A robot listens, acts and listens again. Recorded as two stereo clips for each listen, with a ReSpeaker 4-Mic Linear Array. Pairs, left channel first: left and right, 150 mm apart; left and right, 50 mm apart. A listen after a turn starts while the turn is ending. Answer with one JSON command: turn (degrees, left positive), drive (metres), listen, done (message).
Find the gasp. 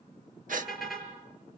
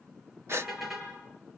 {"turn": -65}
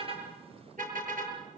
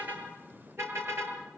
{"listen": true}
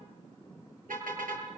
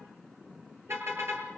{"done": "I heard a gasp, but can't make it out now. It was about straight ahead or 50° right."}